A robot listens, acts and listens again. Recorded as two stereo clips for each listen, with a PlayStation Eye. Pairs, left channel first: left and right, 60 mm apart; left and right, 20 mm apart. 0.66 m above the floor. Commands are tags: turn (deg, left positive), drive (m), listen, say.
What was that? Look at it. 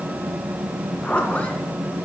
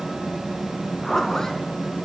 <turn deg="20"/>
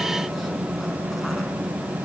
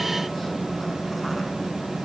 <listen/>
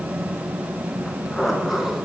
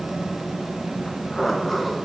<say>Facing the zipper, 1 to 2 m away.</say>